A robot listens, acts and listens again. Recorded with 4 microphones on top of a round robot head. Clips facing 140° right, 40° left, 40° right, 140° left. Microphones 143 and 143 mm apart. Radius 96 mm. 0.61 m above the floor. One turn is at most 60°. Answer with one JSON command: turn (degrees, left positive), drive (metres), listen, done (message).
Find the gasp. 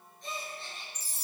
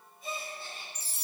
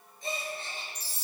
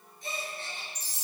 {"turn": -45}
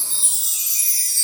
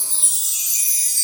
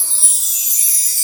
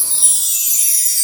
{"done": "I heard a gasp from this way, but can't make it out now."}